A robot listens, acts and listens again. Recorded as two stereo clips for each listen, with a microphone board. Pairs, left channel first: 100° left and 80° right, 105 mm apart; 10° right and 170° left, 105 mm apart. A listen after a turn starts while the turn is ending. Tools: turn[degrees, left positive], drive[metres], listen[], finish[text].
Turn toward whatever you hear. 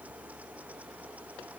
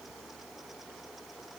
Action: listen[]
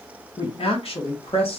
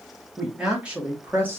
Thought: The woman speaking: 100° left.
Action: turn[100]
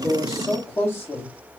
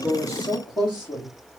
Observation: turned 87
Thought: The woman speaking is now 40° left.
Action: turn[40]
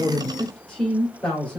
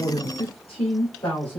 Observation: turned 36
Thought: The woman speaking is now 20° left.
Action: turn[20]
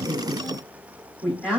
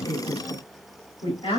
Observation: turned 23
Action: finish[Facing the woman speaking, 2 to 4 m away.]